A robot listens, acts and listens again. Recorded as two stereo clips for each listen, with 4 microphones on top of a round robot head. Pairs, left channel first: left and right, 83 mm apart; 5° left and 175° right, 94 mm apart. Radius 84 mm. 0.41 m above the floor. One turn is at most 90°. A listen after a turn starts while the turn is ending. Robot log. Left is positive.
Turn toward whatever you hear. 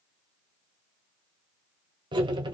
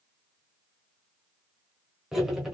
note: The cutlery clinking: 90° right.
cmd yaw -90
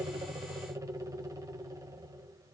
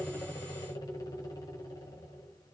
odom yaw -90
note: The cutlery clinking is now 45° right.
cmd yaw -45
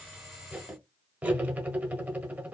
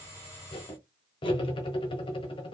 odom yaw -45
note: The cutlery clinking is now 20° right.
cmd yaw -20
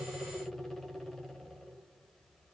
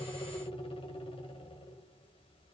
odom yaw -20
end: Found it: cutlery clinking, straight ahead, 1 to 2 m away.